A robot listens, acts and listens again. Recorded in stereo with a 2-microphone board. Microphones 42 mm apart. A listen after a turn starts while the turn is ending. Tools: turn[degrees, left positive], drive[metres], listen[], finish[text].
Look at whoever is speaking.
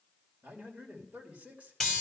Thought: The man speaking: about 30° right or 150° right.
Action: turn[-30]
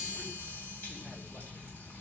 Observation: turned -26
Action: listen[]
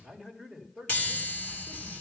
Action: finish[Facing the man speaking.]